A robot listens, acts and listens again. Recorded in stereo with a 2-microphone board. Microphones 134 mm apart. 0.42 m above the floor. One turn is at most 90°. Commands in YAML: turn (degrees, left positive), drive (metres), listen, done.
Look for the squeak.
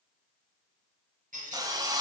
turn: -90
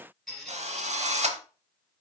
done: "Facing the squeak."